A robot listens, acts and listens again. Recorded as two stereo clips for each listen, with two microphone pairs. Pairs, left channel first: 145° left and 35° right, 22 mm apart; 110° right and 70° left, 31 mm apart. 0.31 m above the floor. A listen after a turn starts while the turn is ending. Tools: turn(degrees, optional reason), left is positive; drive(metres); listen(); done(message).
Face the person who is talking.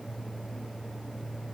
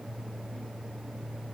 listen()
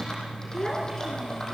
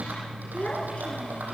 turn(degrees=-150, reason="The child speaking: 150° right.")
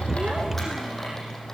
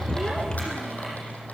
listen()
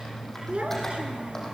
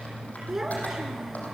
done("Found it: a child speaking, straight ahead, 2 to 4 m away.")